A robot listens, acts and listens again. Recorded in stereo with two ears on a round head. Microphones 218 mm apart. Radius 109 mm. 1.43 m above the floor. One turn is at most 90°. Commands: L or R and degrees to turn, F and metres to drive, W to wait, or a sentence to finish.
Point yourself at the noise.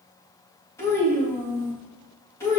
L30
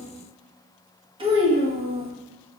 R25
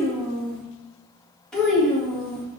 Found it: a child speaking, straight ahead, 1 to 2 m away.